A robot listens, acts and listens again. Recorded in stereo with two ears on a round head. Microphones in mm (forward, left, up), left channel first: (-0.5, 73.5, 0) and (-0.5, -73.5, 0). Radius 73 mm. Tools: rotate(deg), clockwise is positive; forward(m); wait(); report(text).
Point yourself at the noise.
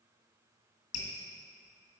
rotate(-45)
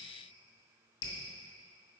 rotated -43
rotate(-90)
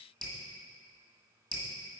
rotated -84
report("Facing the dripping, 1 to 2 m away.")